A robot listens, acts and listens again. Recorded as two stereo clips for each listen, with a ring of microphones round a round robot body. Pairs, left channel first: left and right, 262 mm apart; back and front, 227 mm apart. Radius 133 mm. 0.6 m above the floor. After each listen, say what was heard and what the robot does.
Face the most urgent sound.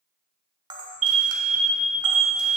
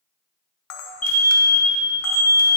The alarm: 125° right. Turn 125° right.
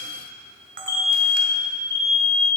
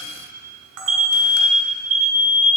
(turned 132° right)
The alarm is now 10° left. Turn 10° left.
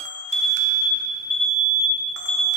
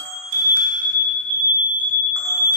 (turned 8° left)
Facing the alarm.